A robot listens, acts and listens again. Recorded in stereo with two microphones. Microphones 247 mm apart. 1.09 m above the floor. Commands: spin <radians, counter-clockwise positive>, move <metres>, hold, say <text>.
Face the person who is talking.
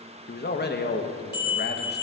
spin 0.79
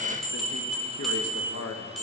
spin 1.66
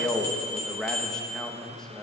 say Facing the man speaking.